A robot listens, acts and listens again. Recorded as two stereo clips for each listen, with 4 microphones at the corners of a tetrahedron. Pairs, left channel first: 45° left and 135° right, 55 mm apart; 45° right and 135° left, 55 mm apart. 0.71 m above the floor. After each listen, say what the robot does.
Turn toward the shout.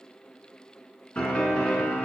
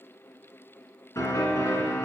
Keep listening.
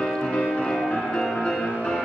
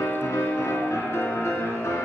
Keep listening.
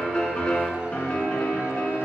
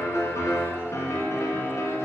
I can't make out a shout, only a piano.